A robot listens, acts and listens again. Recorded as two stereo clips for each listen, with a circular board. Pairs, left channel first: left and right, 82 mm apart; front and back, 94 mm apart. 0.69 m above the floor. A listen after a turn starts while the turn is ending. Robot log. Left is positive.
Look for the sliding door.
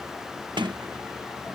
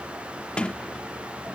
note: The sliding door: 80° right.
cmd yaw -80
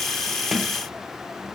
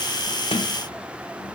end: Found it: a sliding door, straight ahead.